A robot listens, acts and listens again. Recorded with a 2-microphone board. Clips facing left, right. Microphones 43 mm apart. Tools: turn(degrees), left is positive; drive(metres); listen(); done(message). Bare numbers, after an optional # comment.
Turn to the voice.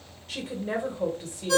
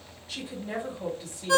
# The woman speaking: about 60° left or 120° left.
turn(60)
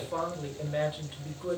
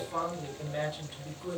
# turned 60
# So it is at 30° left.
turn(30)
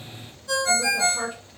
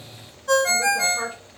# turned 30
done("Facing the woman speaking, 1 to 2 m away.")